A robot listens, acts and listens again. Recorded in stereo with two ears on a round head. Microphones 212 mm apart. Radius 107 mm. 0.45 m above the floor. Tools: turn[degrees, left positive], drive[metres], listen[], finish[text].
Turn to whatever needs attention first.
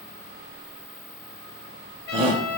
Thought: The shout: about 25° right or 155° right.
Action: turn[-25]
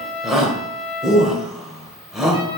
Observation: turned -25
Action: finish[Found it: a shout, straight ahead, 1 to 2 m away.]